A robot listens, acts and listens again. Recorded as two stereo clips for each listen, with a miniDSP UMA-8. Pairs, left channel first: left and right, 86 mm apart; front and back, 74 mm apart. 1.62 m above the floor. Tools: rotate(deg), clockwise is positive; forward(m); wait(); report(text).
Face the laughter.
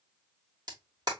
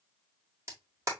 wait()
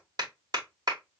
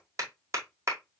wait()
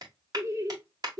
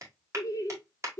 rotate(50)
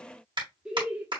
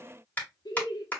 rotate(15)
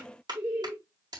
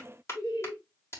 rotate(15)
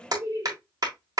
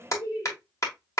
rotate(20)
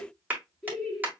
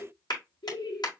report("Found it: laughter, straight ahead.")